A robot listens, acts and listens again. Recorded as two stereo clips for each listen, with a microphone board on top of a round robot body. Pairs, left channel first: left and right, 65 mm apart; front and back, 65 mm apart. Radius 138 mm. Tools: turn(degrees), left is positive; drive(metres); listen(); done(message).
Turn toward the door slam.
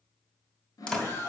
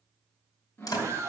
turn(degrees=15)
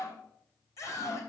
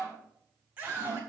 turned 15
done("Facing where the door slam came from. I can't hear it now.")